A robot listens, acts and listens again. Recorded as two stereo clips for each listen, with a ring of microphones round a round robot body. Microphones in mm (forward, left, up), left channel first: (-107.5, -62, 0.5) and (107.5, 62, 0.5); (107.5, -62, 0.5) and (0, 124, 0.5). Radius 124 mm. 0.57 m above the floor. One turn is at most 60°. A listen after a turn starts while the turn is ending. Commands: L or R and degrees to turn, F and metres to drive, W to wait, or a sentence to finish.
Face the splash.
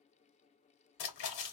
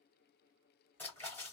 R60
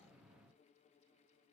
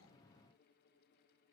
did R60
R60
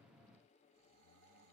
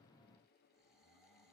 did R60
R25
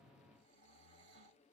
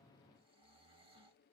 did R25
I heard a splash from this way, but can't make it out now.